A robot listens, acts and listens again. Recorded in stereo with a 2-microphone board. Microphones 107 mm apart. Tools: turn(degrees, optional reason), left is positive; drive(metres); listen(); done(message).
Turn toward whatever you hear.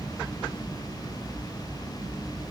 listen()
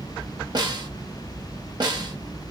turn(degrees=-45, reason="The snare drum: about 45° right or 135° right.")
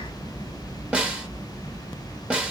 turn(degrees=-15, reason="So it is at 15° right.")
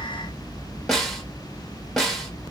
done("Facing the snare drum, under 1 m away.")